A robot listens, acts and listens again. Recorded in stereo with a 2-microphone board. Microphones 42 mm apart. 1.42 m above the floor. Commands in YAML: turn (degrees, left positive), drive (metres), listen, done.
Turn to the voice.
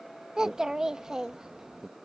turn: -20
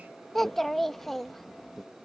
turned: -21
done: "Facing the child speaking."